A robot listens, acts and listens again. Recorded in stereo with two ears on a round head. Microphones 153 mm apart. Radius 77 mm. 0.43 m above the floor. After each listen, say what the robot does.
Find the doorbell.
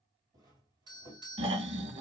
Turn 25° right.
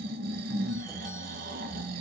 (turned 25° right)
Keep listening.
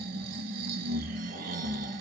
Keep listening.
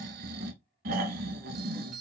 Facing the doorbell.